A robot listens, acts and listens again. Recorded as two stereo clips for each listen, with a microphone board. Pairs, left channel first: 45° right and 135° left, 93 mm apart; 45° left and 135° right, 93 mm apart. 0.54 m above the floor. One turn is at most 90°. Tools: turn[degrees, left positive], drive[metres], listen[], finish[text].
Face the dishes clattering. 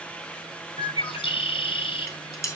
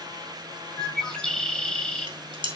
Thought: The dishes clattering: 100° right.
Action: turn[-90]
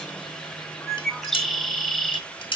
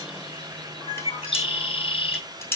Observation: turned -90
Thought: The dishes clattering is now 20° right.
Action: turn[-20]
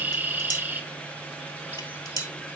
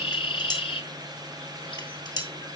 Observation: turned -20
Action: finish[Facing the dishes clattering.]